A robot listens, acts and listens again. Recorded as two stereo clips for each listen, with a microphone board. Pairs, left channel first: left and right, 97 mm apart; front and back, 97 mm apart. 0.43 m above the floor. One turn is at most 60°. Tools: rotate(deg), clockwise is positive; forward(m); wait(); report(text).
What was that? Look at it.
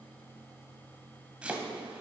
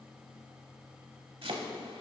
rotate(60)
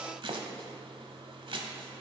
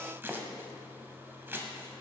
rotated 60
rotate(60)
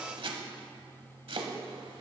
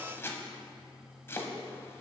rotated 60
rotate(60)
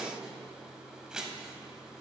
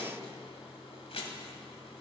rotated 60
report("Facing the chopping.")